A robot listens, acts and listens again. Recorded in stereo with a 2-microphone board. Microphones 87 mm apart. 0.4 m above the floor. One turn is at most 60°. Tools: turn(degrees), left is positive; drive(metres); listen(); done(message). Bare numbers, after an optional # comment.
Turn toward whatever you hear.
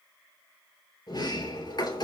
# The sliding door: about 55° left or 125° left.
turn(55)
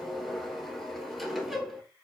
done("Facing the sliding door.")